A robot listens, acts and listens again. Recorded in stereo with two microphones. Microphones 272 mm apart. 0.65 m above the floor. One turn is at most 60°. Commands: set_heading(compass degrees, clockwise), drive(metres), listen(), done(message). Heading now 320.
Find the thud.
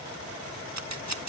listen()
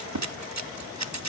listen()
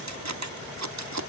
done("I can't make out a thud, only scissors.")